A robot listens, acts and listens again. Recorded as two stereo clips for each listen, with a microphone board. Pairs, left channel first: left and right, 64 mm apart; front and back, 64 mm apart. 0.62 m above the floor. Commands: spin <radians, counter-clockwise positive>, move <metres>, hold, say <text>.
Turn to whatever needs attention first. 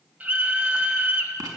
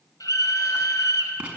spin -0.44
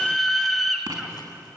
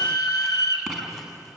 say Facing the scream, 2 to 4 m away.